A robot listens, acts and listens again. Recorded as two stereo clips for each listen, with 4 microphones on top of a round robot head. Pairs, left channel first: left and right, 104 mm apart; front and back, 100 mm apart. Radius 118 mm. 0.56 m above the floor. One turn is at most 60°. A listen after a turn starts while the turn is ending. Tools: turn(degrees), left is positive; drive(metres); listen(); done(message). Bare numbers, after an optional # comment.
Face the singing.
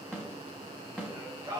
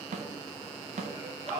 # The singing: 155° right.
turn(-60)
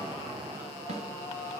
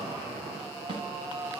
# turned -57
# The singing is now 110° right.
turn(-60)
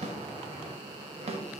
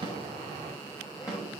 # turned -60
# Nothing new. It was at 50° right.
turn(-50)
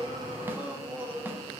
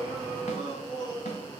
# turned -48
# The singing is now 20° right.
turn(-20)
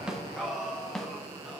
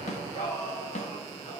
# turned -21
done("Facing the singing, 2 to 4 m away.")